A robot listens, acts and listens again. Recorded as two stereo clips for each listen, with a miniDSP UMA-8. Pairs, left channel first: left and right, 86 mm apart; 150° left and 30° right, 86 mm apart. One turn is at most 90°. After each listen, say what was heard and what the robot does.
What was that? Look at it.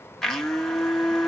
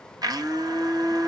Found it: a blender, straight ahead, 1 to 2 m away.